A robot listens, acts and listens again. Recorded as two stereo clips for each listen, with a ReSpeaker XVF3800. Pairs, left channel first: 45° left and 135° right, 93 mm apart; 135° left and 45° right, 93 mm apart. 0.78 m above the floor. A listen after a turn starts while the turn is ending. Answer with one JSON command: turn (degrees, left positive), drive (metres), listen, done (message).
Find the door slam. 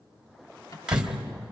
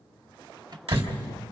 {"turn": -50}
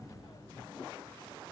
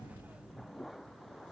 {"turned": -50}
{"done": "I heard a door slam from this way, but can't make it out now."}